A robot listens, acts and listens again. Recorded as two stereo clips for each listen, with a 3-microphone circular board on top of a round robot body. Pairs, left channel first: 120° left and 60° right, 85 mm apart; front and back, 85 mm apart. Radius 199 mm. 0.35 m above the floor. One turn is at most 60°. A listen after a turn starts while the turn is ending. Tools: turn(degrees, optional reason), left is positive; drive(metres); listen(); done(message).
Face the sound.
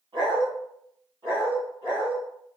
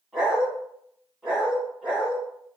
turn(degrees=-60, reason="The dog barking: 100° right.")
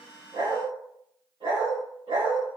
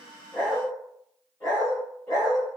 turn(degrees=-50, reason="The dog barking is now 50° right.")
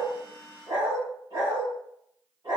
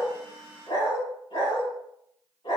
turn(degrees=-10, reason="The dog barking is now 10° right.")
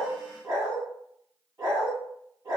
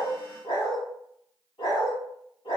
done("Found it: a dog barking, straight ahead, over 4 m away.")